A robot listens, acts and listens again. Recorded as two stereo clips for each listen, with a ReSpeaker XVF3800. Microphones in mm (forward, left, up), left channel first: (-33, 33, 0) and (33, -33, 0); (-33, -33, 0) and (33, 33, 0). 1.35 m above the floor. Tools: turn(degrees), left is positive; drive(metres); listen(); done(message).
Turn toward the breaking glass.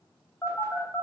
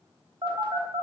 listen()
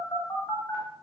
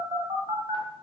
listen()
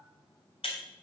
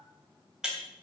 turn(degrees=125)
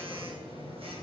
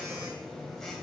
done("I heard breaking glass from this way, but can't make it out now.")